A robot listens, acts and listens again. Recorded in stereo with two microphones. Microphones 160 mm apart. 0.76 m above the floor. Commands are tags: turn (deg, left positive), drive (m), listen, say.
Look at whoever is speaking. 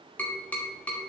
<listen/>
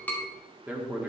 <turn deg="-30"/>
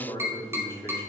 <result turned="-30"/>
<turn deg="20"/>
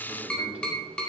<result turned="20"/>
<listen/>
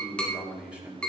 <say>Facing the man speaking.</say>